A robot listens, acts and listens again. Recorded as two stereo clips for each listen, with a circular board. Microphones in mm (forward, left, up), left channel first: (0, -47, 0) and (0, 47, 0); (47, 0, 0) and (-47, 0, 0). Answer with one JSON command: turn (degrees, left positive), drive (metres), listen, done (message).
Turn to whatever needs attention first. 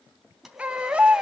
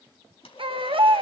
{"turn": 165}
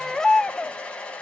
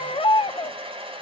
{"done": "Found it: a baby crying, straight ahead, under 1 m away."}